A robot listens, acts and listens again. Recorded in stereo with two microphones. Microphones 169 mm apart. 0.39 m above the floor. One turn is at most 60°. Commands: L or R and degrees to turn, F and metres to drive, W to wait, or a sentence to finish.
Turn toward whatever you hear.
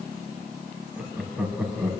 R30
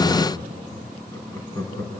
L20
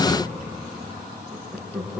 Facing the laughter.